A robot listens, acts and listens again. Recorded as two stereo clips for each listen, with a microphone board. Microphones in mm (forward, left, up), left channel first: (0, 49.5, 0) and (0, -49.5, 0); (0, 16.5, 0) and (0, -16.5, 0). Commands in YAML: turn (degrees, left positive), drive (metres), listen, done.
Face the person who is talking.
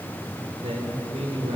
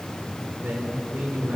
turn: -90
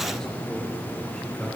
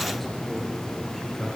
done: "Found it: a man speaking, straight ahead."